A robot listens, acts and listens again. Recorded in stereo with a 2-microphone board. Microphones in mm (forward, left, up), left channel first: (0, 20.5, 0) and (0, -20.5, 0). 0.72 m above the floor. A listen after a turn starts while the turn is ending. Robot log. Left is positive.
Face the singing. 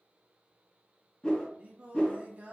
note: The singing: about 35° right or 145° right.
cmd yaw -35
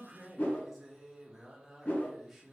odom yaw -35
end: Found it: singing, straight ahead.